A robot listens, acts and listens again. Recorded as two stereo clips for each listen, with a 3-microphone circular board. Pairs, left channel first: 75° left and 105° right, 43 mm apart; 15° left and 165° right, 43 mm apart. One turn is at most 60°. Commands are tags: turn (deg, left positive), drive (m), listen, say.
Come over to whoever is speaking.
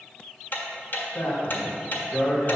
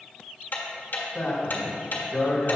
<turn deg="60"/>
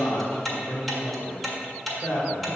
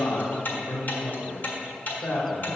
<turn deg="45"/>
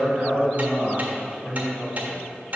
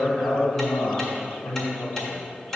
<drive m="1.0"/>
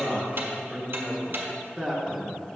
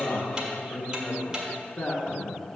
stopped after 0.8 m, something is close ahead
<say>I am next to the man speaking.</say>